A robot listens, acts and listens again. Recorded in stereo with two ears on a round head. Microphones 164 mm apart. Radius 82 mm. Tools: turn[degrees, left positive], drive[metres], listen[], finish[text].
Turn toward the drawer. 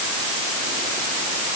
Action: listen[]
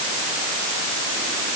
Action: listen[]
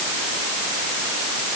Action: finish[I can't make out a drawer to turn to.]